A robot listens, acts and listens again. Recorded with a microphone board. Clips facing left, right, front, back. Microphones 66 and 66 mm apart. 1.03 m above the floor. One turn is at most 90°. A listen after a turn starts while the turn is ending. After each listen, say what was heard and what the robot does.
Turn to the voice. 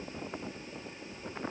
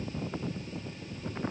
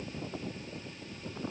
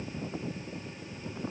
Keep listening.
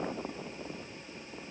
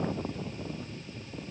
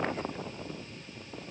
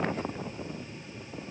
Keep listening.
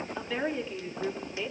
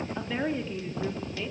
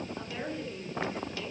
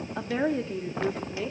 The woman speaking: 175° left. Turn 90° left.
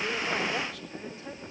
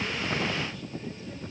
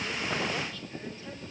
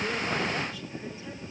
Nothing new. It was at 85° left. Turn 85° left.
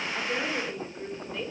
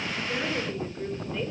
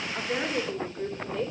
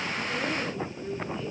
Keep listening.
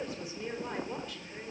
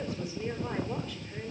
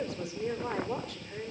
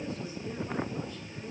I heard a woman speaking from this way, but can't make it out now.